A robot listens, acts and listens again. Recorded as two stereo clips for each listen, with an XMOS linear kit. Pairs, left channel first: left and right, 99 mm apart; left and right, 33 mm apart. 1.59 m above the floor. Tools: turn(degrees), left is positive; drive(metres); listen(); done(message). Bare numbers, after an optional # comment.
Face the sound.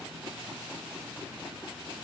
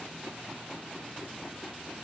listen()
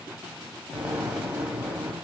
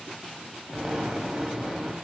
turn(-30)
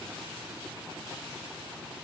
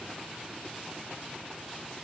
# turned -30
listen()
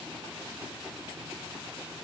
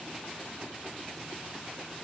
done("I heard an explosion, but can't make it out now. It was about 20° left or 140° right.")